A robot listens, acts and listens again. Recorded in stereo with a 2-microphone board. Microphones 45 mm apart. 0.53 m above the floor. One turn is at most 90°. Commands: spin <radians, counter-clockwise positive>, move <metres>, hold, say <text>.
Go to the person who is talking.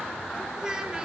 spin -0.35
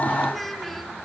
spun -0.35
move 1.0
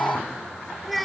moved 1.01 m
move 1.0
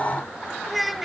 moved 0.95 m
move 1.0
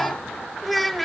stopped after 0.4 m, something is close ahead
say I am next to the child speaking.